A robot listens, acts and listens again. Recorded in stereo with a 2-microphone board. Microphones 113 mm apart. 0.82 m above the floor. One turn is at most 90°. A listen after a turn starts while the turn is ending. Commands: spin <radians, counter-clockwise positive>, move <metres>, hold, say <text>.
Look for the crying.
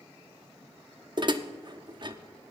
hold
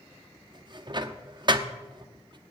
hold
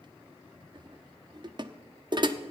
say I can't make out crying to turn to.